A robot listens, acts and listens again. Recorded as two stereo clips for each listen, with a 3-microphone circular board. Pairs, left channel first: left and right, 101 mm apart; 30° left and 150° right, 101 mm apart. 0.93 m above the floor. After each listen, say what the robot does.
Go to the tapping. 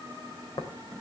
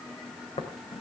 Turn 45° left.
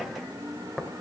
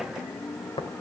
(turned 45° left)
Drive 1.0 m forward.
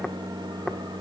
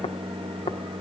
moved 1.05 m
Keep listening.
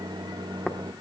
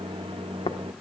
Drive 1.0 m forward.
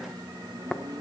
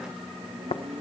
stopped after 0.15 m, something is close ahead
Arrived at the tapping, straight ahead.